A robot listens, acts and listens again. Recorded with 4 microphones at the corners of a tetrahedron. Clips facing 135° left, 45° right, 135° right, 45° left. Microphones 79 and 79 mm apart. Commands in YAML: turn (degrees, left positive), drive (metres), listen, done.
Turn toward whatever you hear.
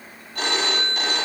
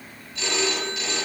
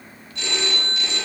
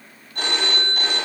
turn: 90
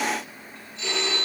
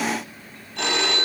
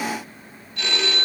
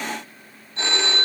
turn: -15
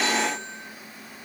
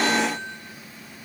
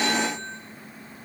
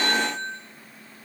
done: "Facing the phone ringing, over 4 m away."